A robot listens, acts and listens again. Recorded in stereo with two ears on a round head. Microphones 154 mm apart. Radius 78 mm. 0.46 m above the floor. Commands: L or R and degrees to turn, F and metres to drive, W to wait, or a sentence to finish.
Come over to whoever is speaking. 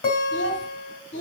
L75
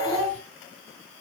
F1.0
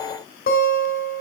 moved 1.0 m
W
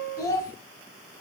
L20
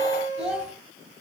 F1.0
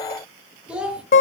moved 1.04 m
F1.0
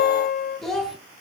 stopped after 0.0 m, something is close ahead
Arrived at the child speaking, straight ahead.